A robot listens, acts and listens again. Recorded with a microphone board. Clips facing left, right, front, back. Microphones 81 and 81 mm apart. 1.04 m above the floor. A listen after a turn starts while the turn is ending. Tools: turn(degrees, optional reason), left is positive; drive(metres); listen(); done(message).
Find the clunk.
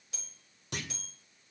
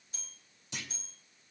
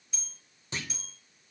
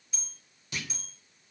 turn(degrees=60, reason="The clunk: 60° left.")
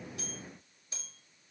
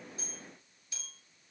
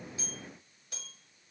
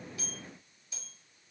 done("I heard a clunk from this way, but can't make it out now.")